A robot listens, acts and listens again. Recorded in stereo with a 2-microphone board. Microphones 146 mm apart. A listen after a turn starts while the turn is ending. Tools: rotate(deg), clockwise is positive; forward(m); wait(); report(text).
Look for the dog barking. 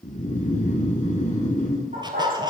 rotate(75)
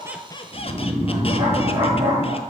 rotate(30)
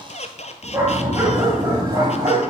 rotate(25)
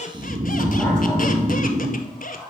wait()
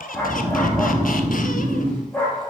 rotate(-10)
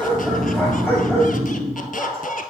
report("Facing the dog barking, 2 to 4 m away.")